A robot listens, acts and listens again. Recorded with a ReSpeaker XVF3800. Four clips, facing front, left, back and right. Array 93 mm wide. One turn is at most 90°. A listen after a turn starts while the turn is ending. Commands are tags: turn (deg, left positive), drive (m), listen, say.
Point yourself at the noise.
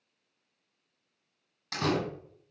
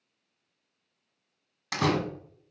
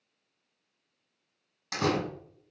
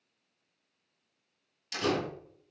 <turn deg="90"/>
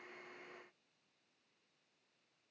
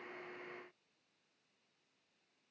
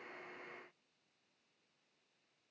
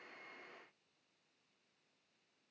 <say>I heard a door slam from this way, but can't make it out now.</say>